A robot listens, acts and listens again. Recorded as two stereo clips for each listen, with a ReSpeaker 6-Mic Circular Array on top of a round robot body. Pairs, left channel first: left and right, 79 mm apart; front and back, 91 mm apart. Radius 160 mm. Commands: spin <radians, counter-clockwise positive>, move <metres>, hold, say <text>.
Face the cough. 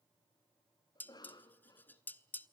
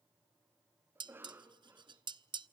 spin 2.01
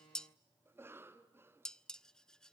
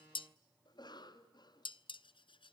spin -0.52
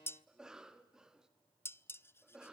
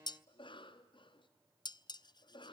spin -0.17
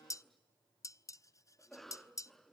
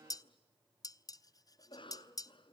say Facing the cough.